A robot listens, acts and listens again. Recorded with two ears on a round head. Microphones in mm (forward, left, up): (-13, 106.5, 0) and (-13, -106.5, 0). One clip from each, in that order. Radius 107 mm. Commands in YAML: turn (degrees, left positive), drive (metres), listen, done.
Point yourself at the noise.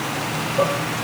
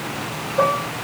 turn: -70
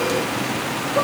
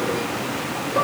done: "Found it: dishes clattering, straight ahead, over 4 m away."